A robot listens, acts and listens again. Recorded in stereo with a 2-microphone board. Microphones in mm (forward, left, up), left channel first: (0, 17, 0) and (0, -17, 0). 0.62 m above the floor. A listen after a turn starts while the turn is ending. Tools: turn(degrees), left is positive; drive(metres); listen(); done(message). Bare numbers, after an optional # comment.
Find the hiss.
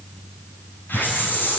turn(90)
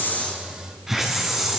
# So it is at 10° right.
turn(-10)
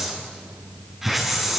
done("Found it: a hiss, straight ahead.")